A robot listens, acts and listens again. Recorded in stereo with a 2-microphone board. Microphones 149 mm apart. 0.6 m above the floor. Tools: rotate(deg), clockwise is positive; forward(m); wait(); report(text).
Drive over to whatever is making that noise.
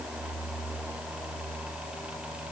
wait()
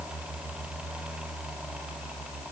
wait()
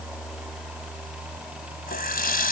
rotate(-90)
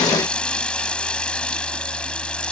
forward(1.0)
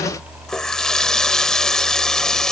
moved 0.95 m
forward(1.0)
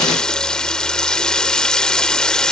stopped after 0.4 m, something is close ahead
report("I am next to the running tap.")